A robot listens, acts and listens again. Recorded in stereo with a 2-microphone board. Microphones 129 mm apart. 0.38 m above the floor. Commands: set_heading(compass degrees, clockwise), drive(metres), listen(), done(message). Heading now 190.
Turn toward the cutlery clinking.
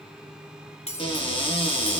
set_heading(135)
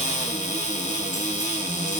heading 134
listen()
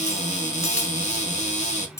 set_heading(104)
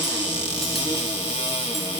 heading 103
listen()
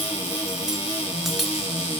listen()
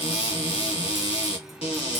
done("I heard cutlery clinking from this way, but can't make it out now.")